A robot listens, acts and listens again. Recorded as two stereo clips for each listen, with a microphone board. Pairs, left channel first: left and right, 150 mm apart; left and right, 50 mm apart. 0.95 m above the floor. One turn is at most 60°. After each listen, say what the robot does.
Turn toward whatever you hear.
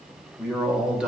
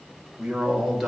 Turn 30° right.
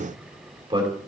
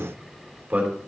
Turn 60° right.
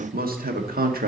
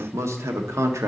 Turn 60° right.
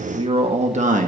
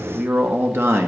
Turn 60° right.
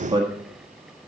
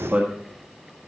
Turn 30° right.
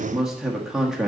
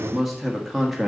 Facing the man speaking, 1 to 2 m away.